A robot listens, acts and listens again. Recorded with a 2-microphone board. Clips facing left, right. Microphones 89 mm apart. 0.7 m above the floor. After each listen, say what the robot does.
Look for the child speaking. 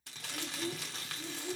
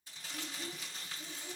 Turn 30° left.
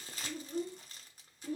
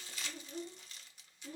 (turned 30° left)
Turn 110° left.
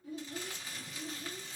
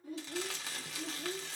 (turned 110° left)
Turn 60° right.
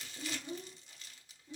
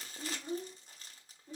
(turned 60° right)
Turn 40° right.
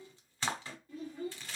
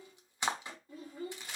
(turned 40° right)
Turn 20° right.
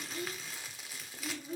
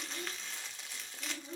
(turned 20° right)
Facing the child speaking, 1 to 2 m away.